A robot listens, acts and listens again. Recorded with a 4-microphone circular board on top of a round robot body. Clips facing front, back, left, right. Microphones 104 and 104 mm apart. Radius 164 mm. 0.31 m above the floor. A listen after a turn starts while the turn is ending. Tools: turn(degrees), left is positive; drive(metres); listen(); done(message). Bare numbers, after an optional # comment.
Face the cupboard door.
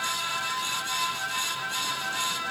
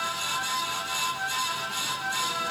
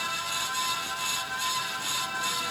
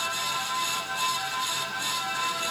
listen()
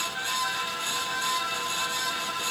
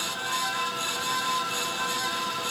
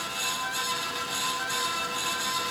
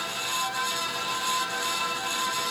listen()
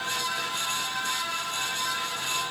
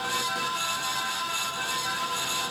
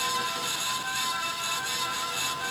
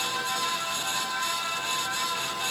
done("I can't make out a cupboard door.")